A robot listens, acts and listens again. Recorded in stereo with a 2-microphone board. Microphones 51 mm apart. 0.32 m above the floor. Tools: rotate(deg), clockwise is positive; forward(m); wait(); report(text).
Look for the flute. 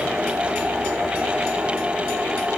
wait()
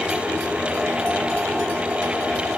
wait()
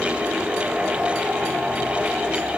report("I can't make out a flute to turn to.")